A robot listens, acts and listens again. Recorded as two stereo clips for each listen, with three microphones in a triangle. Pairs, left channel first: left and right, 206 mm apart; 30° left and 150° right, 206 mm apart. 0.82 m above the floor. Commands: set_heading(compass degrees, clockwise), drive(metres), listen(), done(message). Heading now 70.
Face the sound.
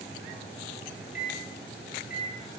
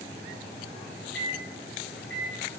set_heading(25)
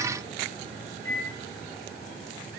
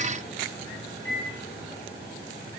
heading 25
set_heading(15)
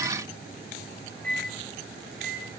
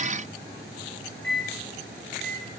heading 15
done("Found it: a microwave, straight ahead.")